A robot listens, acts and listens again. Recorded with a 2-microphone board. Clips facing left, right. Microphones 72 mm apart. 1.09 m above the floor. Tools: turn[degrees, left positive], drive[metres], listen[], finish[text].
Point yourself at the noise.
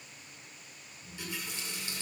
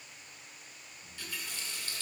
Thought: The running tap: about 20° left or 160° left.
Action: turn[20]
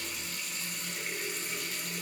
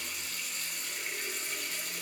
Action: finish[Found it: a running tap, straight ahead, 2 to 4 m away.]